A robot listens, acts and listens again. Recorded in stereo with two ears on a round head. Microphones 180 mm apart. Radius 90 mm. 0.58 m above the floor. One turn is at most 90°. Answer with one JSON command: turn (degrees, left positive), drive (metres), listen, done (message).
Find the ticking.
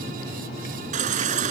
{"listen": true}
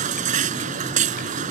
{"listen": true}
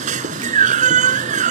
{"done": "I can't make out ticking, only a baby crying."}